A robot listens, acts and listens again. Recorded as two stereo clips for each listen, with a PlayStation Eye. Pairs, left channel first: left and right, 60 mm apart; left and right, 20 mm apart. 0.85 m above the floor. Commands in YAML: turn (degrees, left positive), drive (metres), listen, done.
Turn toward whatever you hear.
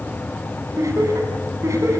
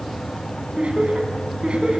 turn: -60
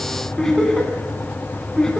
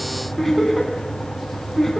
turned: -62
turn: 15
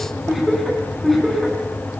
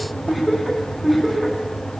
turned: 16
done: "Facing the laughter, over 4 m away."